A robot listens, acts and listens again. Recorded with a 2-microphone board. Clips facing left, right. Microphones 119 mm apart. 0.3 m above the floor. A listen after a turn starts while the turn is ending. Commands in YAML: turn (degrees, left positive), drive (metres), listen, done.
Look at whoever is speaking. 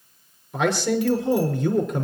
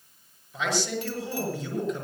turn: 70
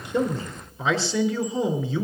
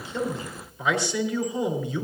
turn: 30
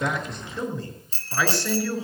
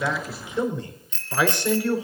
turn: -20
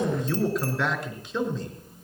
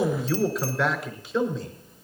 done: "Facing the man speaking."